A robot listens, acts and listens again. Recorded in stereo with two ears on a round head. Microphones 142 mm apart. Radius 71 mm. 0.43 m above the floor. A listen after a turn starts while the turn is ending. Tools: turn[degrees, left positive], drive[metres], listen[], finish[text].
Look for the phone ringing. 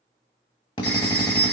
Action: turn[90]
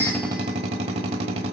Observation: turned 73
Thought: Nothing new. It was at 15° left.
Action: turn[15]
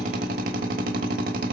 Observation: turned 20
Action: listen[]
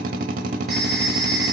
Action: finish[Found it: a phone ringing, straight ahead, 2 to 4 m away.]